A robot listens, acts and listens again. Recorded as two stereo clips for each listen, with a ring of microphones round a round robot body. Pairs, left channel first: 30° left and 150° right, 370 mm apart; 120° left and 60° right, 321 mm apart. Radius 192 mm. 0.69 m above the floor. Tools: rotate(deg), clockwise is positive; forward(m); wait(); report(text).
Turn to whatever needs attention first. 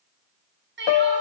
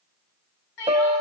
rotate(-150)
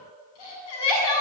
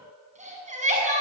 rotate(-10)
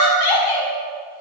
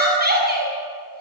report("Found it: crying, straight ahead, over 4 m away.")